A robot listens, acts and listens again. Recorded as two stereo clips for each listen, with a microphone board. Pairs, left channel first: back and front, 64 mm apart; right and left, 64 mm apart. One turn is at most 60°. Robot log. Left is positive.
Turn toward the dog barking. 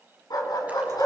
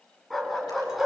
note: The dog barking: straight behind.
cmd yaw +60
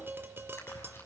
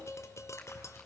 note: Nothing new. It was at 120° left.
cmd yaw +60
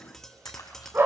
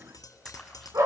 note: The dog barking is now 55° left.
cmd yaw +55
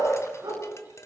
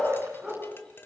end: Found it: a dog barking, straight ahead.